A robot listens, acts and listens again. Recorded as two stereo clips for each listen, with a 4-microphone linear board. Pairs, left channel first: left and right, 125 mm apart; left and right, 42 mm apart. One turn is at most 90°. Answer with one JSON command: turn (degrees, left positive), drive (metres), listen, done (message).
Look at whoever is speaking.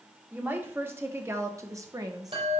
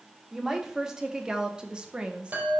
{"turn": -30}
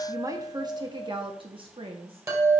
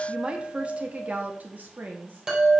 {"turn": -90}
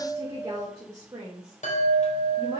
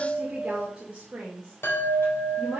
{"turn": -35}
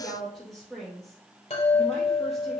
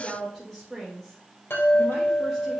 {"done": "Found it: a woman speaking, straight ahead, 2 to 4 m away."}